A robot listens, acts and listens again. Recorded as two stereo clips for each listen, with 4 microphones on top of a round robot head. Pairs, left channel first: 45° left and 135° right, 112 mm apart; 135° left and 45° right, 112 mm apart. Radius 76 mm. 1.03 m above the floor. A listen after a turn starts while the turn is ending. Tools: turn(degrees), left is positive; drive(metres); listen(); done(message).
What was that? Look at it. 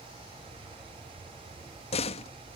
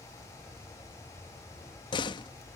turn(degrees=80)
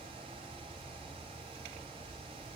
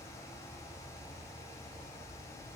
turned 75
done("I heard a door slam from this way, but can't make it out now.")